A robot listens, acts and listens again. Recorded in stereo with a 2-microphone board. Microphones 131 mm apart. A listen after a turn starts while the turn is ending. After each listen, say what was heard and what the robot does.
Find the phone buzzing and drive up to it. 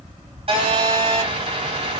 The phone buzzing: about 50° right or 130° right. Turn 50° right.
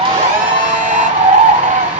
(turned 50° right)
So it is at 10° right. Turn 10° right.
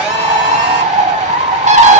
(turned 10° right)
Keep listening.
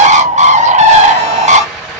Drive 1.0 m forward.
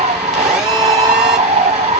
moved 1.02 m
Drive 1.0 m forward.
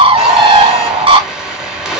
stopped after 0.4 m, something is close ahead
The phone buzzing is now 10° right. Turn 10° right.
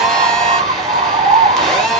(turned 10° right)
Arrived at the phone buzzing, straight ahead.